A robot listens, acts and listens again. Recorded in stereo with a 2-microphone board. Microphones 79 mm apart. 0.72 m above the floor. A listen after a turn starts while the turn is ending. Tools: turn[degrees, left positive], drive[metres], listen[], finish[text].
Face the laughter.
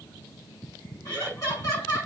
Thought: The laughter: about 30° left or 150° left.
Action: turn[30]
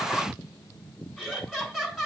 Action: finish[Facing the laughter.]